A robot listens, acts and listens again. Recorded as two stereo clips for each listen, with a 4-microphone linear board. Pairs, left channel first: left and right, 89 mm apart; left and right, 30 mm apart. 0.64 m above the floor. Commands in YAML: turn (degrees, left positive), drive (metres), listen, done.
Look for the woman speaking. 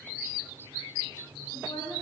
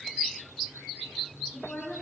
turn: 55
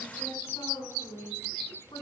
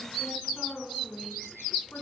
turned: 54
turn: 65
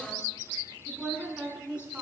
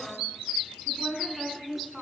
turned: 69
turn: -10
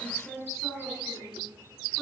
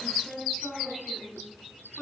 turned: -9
done: "Found it: a woman speaking, straight ahead, over 4 m away."